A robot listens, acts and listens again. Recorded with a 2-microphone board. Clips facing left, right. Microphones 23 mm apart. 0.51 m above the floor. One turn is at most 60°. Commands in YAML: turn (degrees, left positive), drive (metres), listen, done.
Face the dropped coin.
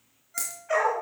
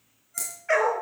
turn: 30
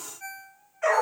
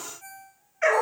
listen: true
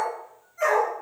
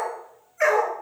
done: "I heard a dropped coin, but can't make it out now. It was about 20° right or 140° left."